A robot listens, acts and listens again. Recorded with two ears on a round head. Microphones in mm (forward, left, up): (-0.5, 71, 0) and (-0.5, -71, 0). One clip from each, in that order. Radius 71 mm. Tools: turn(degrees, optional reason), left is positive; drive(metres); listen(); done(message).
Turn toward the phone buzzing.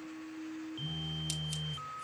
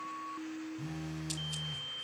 turn(degrees=-20, reason="The phone buzzing: about 20° right or 160° right.")
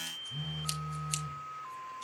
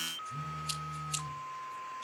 done("Facing the phone buzzing, under 1 m away.")